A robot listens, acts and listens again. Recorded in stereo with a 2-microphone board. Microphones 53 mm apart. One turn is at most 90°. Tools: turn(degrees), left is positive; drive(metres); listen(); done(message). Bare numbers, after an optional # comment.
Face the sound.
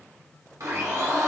# The blender: about 75° right or 105° right.
turn(-75)
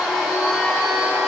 done("Found it: a blender, straight ahead, 1 to 2 m away.")